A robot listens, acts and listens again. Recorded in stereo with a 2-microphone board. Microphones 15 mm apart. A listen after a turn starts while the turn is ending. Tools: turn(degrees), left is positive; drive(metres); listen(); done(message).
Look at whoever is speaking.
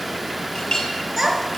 turn(degrees=-30)
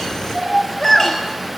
turn(degrees=25)
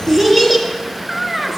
done("Found it: a child speaking, straight ahead.")